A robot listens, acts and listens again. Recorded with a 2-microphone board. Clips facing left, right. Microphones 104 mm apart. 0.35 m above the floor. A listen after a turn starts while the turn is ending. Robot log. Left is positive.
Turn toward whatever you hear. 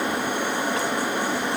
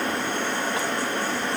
cmd idle
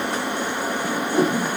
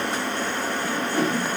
note: The whoosh: about 15° left or 165° left.
cmd yaw +15
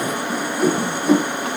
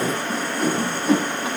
end: Found it: a whoosh, straight ahead.